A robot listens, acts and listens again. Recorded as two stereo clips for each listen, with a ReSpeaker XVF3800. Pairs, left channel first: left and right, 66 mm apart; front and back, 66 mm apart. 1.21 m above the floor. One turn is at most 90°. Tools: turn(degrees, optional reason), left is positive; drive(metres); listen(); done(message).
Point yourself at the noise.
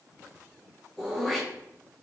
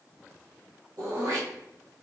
turn(degrees=90, reason="The throat clearing: 175° left.")
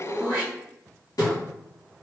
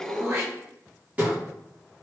turn(degrees=90, reason="The throat clearing is now 115° left.")
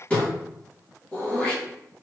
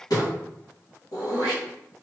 turn(degrees=20, reason="The throat clearing is now 20° left.")
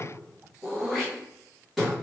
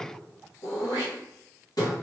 done("Facing the throat clearing.")